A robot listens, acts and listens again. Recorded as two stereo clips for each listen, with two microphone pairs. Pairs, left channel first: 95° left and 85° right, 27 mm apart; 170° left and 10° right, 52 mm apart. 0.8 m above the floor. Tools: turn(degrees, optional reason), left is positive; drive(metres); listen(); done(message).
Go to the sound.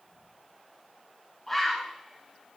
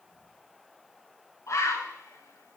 turn(degrees=175, reason="The bird: 175° left.")
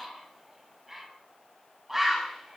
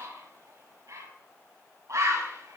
drive(metres=1.0)
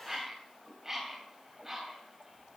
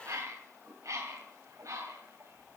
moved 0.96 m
turn(degrees=-10, reason="The bird is now 10° right.")
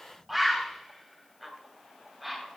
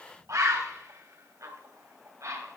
drive(metres=1.0)
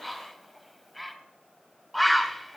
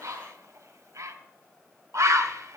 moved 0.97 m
turn(degrees=10, reason="The bird is now 10° left.")
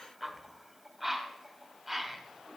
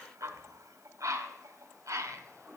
drive(metres=1.0)
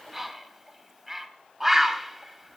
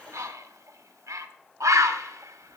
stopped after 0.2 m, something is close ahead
done("Arrived at the bird, straight ahead.")